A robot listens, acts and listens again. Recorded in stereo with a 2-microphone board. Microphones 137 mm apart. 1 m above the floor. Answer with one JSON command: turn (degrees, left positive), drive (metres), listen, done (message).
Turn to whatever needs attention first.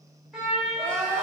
{"turn": 30}
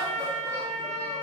{"listen": true}
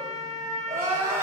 {"turn": -20}
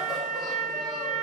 {"listen": true}
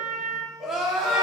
{"done": "Found it: crying, straight ahead."}